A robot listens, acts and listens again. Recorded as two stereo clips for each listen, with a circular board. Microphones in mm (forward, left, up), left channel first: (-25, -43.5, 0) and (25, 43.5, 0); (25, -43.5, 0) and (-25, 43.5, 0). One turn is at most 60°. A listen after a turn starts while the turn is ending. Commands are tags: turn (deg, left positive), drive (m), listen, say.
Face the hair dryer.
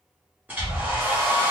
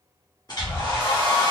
<turn deg="-15"/>
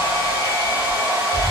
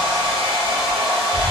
<say>Facing the hair dryer.</say>